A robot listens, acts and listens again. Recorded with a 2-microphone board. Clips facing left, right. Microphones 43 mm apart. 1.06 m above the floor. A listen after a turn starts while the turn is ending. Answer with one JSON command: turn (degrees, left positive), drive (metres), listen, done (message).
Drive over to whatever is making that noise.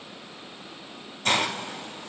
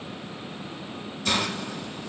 {"turn": 55}
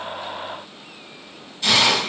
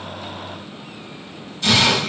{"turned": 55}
{"turn": 10}
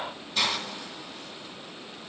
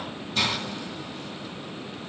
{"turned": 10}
{"drive": 1.0}
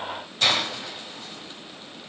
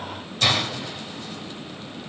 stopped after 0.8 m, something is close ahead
{"done": "I am next to the hiss."}